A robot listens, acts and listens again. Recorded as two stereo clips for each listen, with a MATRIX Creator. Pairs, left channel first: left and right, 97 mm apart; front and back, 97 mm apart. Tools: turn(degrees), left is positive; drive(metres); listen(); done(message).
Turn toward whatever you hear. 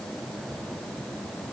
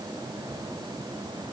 listen()
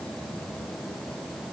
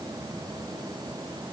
listen()
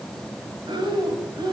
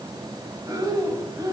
turn(degrees=-125)
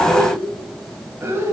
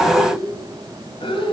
turn(degrees=-25)
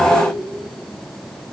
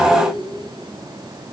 listen()
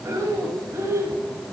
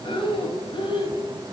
turn(degrees=-30)
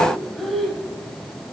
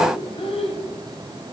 done("Found it: breathing, straight ahead.")